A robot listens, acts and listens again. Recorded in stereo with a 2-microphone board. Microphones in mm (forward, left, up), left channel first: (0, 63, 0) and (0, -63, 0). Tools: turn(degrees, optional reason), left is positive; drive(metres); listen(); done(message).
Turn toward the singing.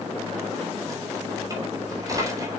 listen()
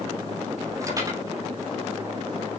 listen()
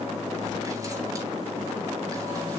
done("I can't make out singing to turn to.")